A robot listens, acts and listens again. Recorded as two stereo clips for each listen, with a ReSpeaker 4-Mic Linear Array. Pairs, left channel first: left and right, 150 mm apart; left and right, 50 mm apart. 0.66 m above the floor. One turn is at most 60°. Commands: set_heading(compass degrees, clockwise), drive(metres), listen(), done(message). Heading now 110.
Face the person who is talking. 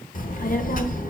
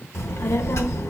set_heading(50)
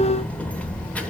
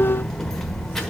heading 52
set_heading(42)
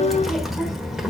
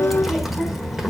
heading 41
done("Facing the child speaking.")